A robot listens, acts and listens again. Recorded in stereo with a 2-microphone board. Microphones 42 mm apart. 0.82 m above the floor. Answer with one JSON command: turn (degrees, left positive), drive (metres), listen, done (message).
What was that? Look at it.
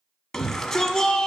{"turn": 30}
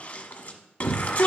{"turn": 145}
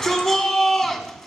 {"turn": 15}
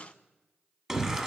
{"done": "Found it: a shout, straight ahead, 1 to 2 m away."}